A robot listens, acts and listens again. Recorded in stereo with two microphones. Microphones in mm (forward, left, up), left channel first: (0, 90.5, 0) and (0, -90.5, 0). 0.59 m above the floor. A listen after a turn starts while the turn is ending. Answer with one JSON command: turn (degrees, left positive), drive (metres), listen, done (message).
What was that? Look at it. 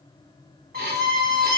{"turn": -55}
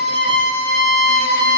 {"turn": -65}
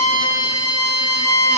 {"turn": 15}
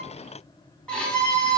{"done": "Facing the violin."}